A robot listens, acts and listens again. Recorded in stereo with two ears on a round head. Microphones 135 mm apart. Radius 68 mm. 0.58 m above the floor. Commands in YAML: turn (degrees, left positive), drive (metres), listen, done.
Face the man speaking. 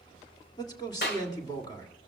turn: 25
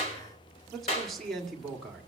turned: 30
done: "Found it: a man speaking, straight ahead, 1 to 2 m away."